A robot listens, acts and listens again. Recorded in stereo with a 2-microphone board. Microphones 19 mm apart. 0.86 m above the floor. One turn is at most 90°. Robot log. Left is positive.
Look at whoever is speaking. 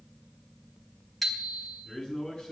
note: The man speaking: about 40° left or 140° left.
cmd yaw +40
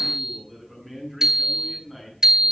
end: Found it: a man speaking, straight ahead.